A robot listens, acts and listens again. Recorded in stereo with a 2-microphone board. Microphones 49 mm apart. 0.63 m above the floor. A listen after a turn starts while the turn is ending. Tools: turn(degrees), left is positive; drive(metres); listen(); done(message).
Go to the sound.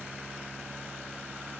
listen()
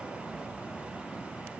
listen()
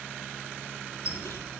turn(degrees=65)
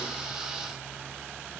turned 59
listen()
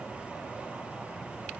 listen()
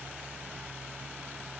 done("I heard a squeak, but can't make it out now. It was about 10° left or 55° left. I did not reach it.")